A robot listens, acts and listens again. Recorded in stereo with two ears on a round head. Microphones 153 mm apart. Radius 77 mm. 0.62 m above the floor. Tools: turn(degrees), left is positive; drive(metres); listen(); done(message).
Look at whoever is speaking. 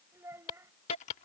turn(degrees=-15)
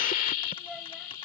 listen()
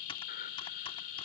listen()
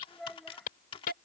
done("Facing the child speaking.")